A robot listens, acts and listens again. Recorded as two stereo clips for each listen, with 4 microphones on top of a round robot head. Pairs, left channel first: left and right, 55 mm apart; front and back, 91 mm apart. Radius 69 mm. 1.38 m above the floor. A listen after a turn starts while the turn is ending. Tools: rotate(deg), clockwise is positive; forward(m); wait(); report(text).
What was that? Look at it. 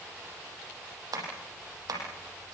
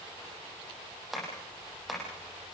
rotate(90)
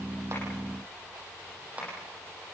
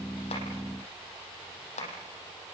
rotate(15)
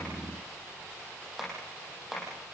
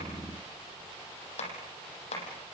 report("Facing the tapping.")